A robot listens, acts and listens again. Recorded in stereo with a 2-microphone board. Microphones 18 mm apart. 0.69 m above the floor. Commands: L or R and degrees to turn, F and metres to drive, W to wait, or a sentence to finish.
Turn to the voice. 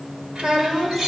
R60
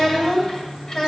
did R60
L20
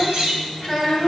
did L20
L10
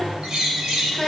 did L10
L10
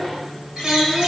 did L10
Found it: a child speaking, straight ahead.